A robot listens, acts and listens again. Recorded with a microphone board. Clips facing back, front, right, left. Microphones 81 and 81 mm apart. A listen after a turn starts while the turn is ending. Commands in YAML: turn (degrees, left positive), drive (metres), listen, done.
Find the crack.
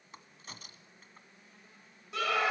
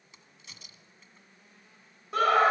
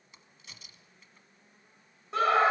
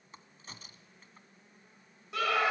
turn: 140
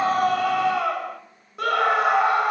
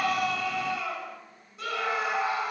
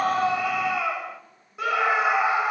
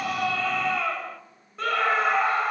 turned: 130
turn: 10
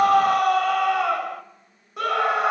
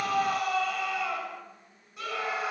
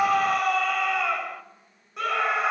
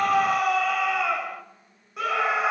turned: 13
done: "I heard a crack from this way, but can't make it out now."